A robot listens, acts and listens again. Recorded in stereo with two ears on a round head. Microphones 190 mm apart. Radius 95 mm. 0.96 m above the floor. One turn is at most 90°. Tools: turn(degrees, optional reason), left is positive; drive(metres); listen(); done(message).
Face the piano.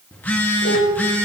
turn(degrees=45, reason="The piano: about 45° left or 135° left.")
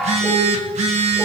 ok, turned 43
done("Found it: a piano, straight ahead.")